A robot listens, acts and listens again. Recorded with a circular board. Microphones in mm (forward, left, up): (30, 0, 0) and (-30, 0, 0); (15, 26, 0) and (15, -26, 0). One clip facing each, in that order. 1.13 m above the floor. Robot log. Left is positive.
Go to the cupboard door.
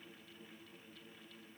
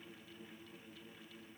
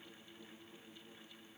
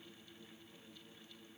cmd idle
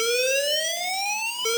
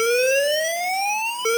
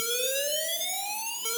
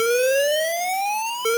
cmd idle
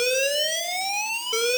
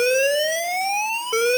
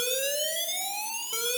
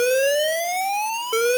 end: I can't make out a cupboard door to turn to.